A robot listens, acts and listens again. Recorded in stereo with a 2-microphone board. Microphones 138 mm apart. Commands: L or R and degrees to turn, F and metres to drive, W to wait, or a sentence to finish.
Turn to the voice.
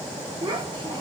R35
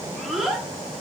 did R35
Facing the child speaking.